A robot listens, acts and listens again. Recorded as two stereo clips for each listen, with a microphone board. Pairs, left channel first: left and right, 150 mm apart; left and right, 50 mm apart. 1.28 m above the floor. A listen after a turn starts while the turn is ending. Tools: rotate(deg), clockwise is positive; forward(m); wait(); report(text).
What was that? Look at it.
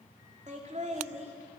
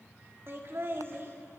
rotate(50)
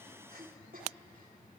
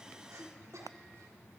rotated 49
rotate(80)
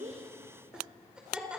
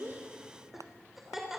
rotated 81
report("Facing the laughter.")